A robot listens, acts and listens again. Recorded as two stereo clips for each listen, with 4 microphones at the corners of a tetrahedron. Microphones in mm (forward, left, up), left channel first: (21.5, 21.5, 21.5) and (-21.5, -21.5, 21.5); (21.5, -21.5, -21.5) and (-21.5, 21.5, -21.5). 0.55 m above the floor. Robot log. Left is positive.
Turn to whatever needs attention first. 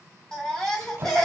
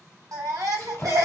note: The baby crying: 125° left.
cmd yaw +125
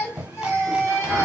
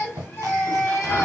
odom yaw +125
end: Facing the baby crying.